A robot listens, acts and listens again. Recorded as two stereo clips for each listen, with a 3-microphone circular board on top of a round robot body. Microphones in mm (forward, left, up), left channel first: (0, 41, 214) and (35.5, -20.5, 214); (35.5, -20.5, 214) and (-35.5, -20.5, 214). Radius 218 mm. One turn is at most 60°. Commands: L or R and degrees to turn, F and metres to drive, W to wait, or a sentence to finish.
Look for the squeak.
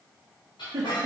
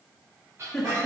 L60
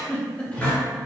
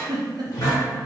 L45
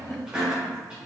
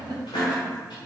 L15
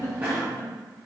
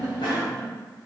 L10
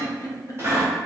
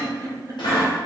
Facing the squeak.